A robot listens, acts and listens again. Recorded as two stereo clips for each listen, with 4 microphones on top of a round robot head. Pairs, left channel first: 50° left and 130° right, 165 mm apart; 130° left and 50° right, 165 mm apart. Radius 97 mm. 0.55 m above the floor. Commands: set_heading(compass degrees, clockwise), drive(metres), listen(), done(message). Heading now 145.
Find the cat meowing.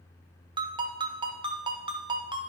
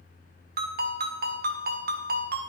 listen()
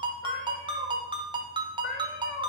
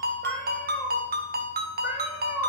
set_heading(120)
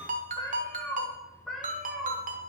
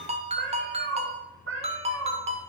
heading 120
set_heading(170)
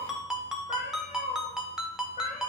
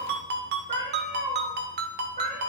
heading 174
done("Found it: a cat meowing, straight ahead.")